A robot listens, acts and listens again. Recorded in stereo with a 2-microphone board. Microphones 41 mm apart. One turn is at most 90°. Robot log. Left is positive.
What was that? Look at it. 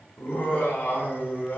note: The laughter: about 60° left or 120° left.
cmd yaw +60
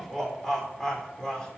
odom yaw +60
note: So it is at 15° left.
cmd yaw +15
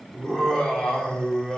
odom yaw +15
note: The laughter is now 15° left.
cmd yaw +15
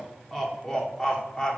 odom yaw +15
note: The laughter is now 15° left.
cmd yaw +15
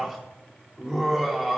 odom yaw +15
end: Found it: laughter, straight ahead, 2 to 4 m away.